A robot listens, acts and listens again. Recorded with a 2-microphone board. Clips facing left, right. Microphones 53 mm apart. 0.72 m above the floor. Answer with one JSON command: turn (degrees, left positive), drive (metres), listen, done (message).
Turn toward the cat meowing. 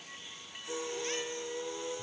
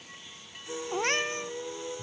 {"turn": -65}
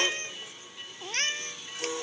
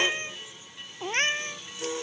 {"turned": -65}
{"turn": -30}
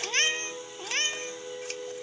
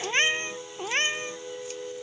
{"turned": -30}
{"turn": -25}
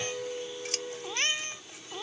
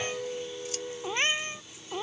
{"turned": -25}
{"turn": -20}
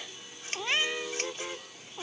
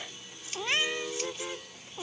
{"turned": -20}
{"done": "Found it: a cat meowing, straight ahead."}